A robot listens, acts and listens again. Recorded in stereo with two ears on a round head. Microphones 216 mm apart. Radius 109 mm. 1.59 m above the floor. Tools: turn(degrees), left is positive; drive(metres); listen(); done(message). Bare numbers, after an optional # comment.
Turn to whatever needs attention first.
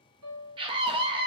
# The scream: about 20° right or 160° right.
turn(-20)
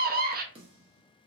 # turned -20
# So it is at 140° right.
turn(-140)
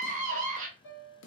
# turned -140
# The scream is now 35° right.
turn(-35)
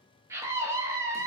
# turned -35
# The scream is now 10° right.
turn(-10)
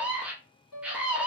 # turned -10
done("Found it: a scream, straight ahead, under 1 m away.")